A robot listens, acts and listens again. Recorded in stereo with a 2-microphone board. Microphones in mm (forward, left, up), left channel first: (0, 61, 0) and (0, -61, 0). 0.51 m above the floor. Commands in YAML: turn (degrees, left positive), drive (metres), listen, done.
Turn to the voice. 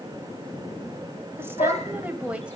turn: -30
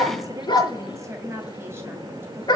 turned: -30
turn: -20
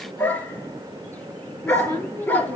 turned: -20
turn: -150
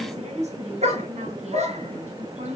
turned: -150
turn: -65
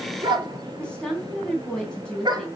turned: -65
done: "Facing the woman speaking, 2 to 4 m away."